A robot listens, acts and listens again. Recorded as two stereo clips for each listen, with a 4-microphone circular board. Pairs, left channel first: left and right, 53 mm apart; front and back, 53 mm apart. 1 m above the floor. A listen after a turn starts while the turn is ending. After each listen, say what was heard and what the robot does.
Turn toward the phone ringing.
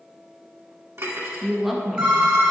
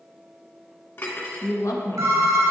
The phone ringing: 165° right. Turn 165° right.
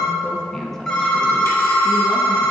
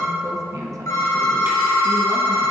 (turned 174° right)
The phone ringing is now 10° left. Turn 10° left.
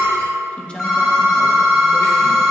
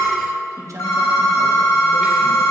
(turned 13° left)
Facing the phone ringing, 1 to 2 m away.